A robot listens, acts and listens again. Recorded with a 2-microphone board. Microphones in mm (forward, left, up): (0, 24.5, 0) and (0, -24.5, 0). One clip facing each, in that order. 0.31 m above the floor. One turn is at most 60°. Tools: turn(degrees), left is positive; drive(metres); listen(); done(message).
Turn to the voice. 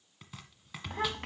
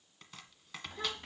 turn(degrees=60)
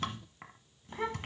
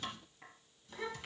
turn(degrees=40)
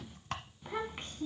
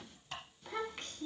turn(degrees=20)
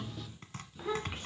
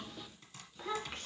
turn(degrees=10)
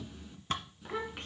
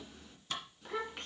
done("Facing the child speaking.")